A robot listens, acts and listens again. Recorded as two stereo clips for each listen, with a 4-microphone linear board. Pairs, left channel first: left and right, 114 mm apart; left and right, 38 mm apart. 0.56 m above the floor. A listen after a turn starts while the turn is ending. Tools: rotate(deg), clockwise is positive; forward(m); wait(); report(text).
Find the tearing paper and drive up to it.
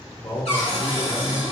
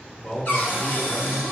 wait()
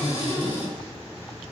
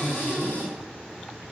wait()
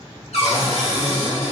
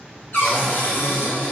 report("I can't make out tearing paper to turn to.")